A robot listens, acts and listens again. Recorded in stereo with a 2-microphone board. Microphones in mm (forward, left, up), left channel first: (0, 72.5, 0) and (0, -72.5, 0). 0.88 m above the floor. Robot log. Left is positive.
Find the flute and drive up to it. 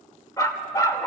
cmd idle
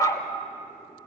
cmd idle
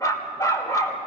end: I can't make out a flute to turn to.